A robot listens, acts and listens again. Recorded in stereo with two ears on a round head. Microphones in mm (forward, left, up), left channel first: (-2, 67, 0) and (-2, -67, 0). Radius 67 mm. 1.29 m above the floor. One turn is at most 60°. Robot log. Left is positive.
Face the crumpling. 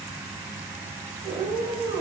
cmd idle
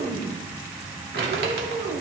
note: The crumpling: about 75° right or 105° right.
cmd yaw -60
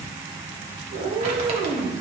cmd idle
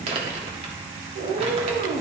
note: So it is at 45° right.
cmd yaw -45
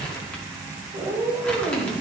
cmd idle
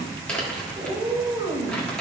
note: The crumpling is now 10° left.
cmd yaw +10
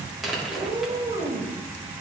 end: Found it: crumpling, straight ahead, 1 to 2 m away.